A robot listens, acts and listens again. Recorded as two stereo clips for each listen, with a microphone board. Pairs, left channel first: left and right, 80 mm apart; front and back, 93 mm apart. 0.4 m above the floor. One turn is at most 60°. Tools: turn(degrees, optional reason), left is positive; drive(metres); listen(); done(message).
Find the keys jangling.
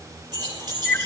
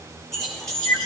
turn(degrees=-60, reason="The keys jangling: 85° right.")
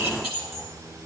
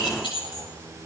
turn(degrees=-25, reason="The keys jangling is now 25° right.")
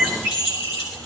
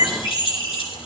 turn(degrees=-15, reason="The keys jangling is now 15° right.")
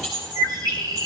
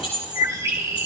done("Found it: keys jangling, straight ahead, over 4 m away.")